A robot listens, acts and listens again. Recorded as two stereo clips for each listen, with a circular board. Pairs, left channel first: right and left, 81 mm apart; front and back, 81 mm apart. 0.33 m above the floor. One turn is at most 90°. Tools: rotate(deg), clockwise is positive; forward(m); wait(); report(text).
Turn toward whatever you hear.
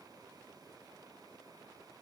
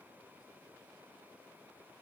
wait()
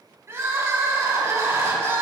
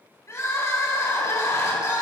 rotate(-45)
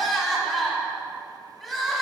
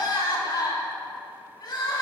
report("Facing the crying.")